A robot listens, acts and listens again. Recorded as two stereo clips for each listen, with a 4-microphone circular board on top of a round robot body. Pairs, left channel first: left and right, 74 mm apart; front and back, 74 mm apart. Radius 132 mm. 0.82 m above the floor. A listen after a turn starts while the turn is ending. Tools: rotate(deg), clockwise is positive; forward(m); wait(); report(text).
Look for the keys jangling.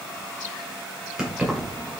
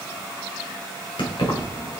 report("Facing the keys jangling.")